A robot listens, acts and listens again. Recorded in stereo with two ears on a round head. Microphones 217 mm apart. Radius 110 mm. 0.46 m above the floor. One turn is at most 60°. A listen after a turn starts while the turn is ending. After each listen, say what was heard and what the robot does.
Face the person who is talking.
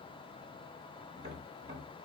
Keep listening.
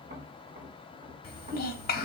The child speaking: about 40° left or 140° left. Turn 40° left.
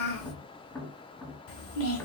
So it is at 90° left. Turn 60° left.
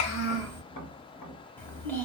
The child speaking is now 10° left. Turn 10° left.
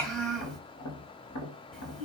Found it: a child speaking, straight ahead.